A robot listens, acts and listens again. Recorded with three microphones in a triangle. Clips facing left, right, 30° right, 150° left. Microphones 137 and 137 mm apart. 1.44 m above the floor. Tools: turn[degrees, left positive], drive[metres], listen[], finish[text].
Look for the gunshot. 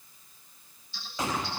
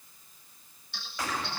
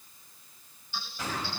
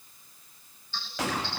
Thought: The gunshot: 160° left.
Action: turn[160]
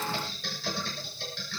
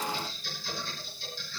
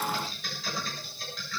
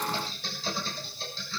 Action: finish[Facing where the gunshot came from. I can't hear it now.]